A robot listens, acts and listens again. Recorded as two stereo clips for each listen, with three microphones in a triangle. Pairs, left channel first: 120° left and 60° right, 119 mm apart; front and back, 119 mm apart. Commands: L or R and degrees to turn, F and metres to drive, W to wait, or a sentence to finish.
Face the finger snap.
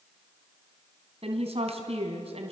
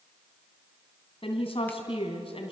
W
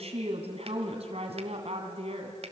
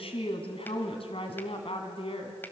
W
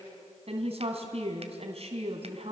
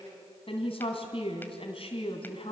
I can't make out a finger snap, only a woman speaking.